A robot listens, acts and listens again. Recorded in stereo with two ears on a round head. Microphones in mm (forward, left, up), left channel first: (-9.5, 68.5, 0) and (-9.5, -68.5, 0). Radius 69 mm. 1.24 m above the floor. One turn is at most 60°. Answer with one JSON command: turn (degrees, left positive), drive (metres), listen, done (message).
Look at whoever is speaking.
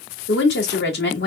{"turn": 60}
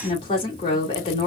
{"turn": 30}
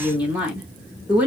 {"turn": -10}
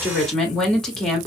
{"done": "Found it: a woman speaking, straight ahead, 2 to 4 m away."}